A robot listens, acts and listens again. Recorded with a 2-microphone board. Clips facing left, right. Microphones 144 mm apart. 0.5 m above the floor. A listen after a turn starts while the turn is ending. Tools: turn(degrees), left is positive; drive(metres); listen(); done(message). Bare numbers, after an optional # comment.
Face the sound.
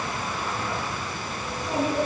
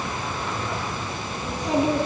turn(-90)
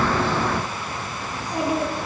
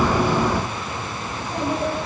# So it is at 15° left.
turn(15)
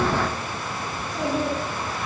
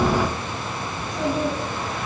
done("Found it: a child speaking, straight ahead.")